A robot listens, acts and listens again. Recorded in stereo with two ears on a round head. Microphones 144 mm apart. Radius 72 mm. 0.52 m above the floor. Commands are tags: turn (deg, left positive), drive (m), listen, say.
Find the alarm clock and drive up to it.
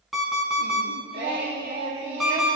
<turn deg="30"/>
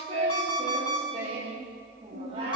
<turn deg="150"/>
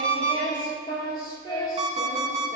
<turn deg="-40"/>
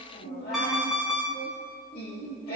<drive m="1.0"/>
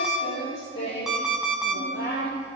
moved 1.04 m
<drive m="1.0"/>
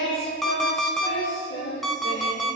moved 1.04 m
<drive m="1.0"/>
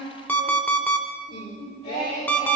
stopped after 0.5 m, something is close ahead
<turn deg="10"/>
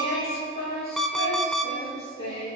<say>I am next to the alarm clock.</say>